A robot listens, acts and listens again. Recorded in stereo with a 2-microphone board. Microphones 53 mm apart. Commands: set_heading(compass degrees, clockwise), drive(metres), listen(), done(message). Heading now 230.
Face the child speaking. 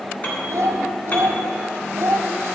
set_heading(295)
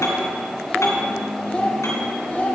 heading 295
set_heading(260)
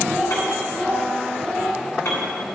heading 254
set_heading(239)
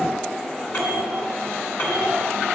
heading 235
listen()
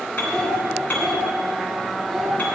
done("Facing the child speaking, 1 to 2 m away.")